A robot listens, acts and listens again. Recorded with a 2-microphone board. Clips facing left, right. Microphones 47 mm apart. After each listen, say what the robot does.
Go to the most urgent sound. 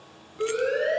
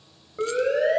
Turn 65° right.
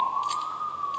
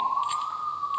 Turn 30° right.
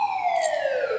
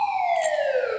Drive 1.0 m forward.
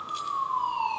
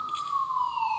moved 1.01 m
Drive 1.0 m forward.
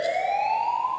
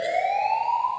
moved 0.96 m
Drive 1.0 m forward.
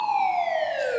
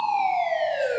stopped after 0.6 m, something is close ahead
Arrived at the siren, straight ahead.